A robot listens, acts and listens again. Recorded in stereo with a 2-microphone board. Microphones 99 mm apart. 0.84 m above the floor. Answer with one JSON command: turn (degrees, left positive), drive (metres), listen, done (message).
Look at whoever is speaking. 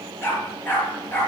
{"listen": true}
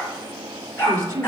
{"turn": -35}
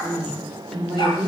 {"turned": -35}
{"done": "Found it: a woman speaking, straight ahead, 2 to 4 m away."}